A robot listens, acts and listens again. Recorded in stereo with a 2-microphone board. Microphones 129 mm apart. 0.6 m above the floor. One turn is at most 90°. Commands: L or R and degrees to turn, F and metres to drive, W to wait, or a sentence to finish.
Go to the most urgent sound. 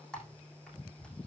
W
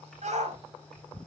R65
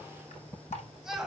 F1.0
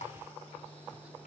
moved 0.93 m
W
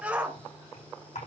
R10
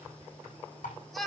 F1.0
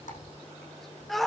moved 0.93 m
F1.0
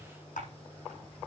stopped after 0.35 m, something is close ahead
W
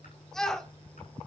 Arrived at the shout, straight ahead.